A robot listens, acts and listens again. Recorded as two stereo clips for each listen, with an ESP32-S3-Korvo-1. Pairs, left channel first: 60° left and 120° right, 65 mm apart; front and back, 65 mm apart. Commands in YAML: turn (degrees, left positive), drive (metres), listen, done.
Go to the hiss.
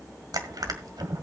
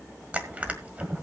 listen: true
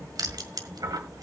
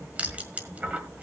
listen: true
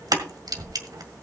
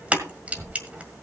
done: "I can't make out a hiss, only crushing."